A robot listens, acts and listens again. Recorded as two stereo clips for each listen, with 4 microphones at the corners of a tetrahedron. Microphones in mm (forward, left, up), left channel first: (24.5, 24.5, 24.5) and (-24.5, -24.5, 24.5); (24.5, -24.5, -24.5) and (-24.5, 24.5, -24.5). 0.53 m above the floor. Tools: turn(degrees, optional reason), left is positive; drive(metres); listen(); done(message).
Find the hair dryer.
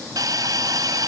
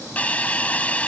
listen()
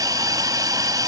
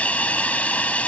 listen()
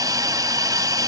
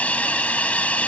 done("I can't make out a hair dryer to turn to.")